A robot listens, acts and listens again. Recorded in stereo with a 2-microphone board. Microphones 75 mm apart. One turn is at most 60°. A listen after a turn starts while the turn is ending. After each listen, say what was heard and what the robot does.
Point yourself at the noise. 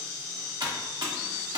The typing on a keyboard: about 65° right or 115° right. Turn 60° right.
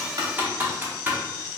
So it is at 25° right. Turn 25° right.
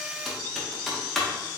Facing the typing on a keyboard.